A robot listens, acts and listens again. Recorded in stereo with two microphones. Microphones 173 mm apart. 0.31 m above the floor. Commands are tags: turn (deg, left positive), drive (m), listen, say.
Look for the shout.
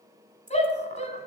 <turn deg="40"/>
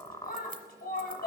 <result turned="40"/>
<turn deg="90"/>
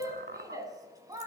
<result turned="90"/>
<turn deg="-25"/>
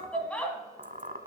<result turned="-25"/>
<turn deg="10"/>
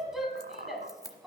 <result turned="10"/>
<say>Found it: a shout, straight ahead, 1 to 2 m away.</say>